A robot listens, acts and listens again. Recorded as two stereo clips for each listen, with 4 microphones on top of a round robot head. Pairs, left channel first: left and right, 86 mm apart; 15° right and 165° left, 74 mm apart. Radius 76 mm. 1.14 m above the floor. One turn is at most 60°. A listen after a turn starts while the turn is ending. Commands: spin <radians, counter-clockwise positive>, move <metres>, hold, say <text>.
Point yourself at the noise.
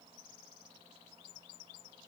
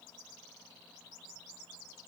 hold
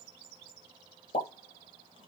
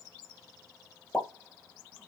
spin 1.05
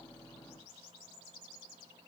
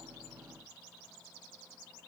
say Facing where the pop came from. I can't hear it now.